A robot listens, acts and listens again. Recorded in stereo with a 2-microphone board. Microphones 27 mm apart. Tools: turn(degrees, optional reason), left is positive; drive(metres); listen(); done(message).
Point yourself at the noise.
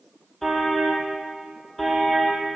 turn(degrees=30)
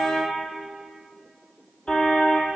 turn(degrees=135, reason="So it is at 135° left.")
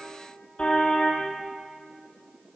turn(degrees=40, reason="The car horn is now 40° left.")
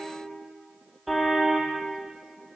turn(degrees=-10, reason="The car horn is now 10° right.")
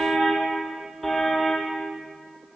done("Facing the car horn.")